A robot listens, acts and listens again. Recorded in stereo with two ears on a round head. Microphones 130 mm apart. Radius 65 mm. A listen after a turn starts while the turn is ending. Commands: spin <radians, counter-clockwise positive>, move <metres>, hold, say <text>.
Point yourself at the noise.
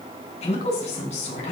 spin 0.96
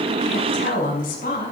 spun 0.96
spin 1.13
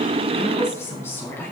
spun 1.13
spin 0.26
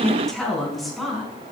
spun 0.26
say Found it: a woman speaking, straight ahead, over 4 m away.